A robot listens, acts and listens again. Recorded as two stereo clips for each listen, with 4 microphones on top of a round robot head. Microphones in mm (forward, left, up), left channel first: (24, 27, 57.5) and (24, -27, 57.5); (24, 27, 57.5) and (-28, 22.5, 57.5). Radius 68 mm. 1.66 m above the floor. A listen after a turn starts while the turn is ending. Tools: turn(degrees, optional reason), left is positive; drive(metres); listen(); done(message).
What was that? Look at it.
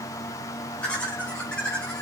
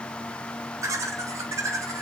turn(degrees=165, reason="The laughter: 165° left.")
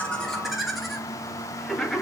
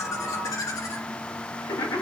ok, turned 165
done("Facing the laughter, 2 to 4 m away.")